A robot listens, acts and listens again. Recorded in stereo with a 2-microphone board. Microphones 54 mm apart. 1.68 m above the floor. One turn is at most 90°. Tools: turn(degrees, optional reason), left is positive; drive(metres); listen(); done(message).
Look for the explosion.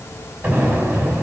turn(degrees=-25, reason="The explosion: about 25° right or 155° right.")
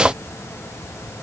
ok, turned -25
listen()
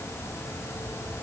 done("I heard an explosion, but can't make it out now. It was about straight ahead or 130° right.")